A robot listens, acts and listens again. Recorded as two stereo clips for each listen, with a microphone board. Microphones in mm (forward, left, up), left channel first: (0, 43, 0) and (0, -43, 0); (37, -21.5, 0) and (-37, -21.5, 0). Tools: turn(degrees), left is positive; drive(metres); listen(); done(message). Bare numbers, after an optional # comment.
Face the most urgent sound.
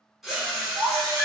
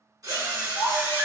# The baby crying: 120° right.
turn(-120)
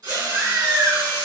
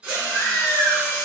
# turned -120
# The baby crying is now 50° right.
turn(-50)
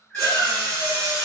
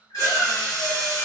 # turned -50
# The baby crying is now 10° left.
turn(10)
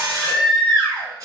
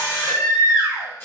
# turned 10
done("Found it: a baby crying, straight ahead, under 1 m away.")